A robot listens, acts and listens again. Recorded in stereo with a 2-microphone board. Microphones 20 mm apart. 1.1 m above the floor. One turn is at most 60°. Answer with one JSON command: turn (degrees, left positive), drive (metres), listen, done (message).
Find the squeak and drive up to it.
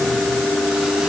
{"listen": true}
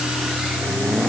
{"listen": true}
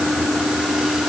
{"done": "I can't make out a squeak."}